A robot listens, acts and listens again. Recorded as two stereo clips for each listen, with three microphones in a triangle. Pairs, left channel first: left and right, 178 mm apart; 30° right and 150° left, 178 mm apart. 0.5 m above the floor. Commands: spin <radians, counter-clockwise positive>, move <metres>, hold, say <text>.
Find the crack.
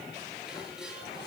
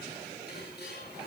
hold
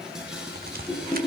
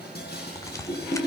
spin -1.75
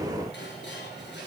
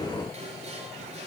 say Facing where the crack came from. I can't hear it now.